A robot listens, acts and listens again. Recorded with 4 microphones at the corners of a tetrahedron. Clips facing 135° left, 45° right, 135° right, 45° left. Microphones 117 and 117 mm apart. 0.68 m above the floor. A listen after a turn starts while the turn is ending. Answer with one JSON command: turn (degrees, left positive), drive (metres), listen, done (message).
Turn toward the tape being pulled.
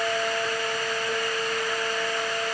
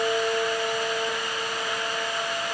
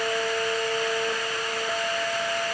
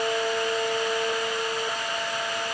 {"listen": true}
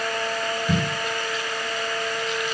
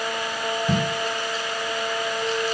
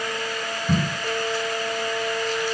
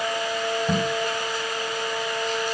{"done": "Facing the tape being pulled."}